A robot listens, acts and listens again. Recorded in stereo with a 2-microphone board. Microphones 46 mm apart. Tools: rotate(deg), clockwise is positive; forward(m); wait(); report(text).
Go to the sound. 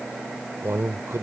rotate(70)
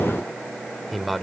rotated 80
forward(1.0)
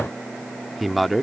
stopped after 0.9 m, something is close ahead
report("I am next to the man speaking.")